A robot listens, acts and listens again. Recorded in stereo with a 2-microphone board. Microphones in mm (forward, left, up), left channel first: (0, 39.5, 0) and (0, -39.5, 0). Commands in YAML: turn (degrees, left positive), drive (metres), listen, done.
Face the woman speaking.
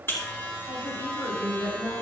turn: 35
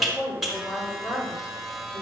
turn: 125
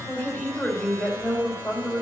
turn: 15
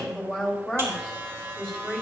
done: "Facing the woman speaking."